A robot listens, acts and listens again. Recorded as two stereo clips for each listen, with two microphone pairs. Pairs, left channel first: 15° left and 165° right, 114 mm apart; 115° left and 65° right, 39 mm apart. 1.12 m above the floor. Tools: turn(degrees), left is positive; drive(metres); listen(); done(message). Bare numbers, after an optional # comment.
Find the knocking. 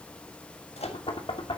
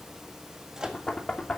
# The knocking: 50° left.
turn(50)
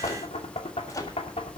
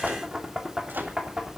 done("Found it: knocking, straight ahead.")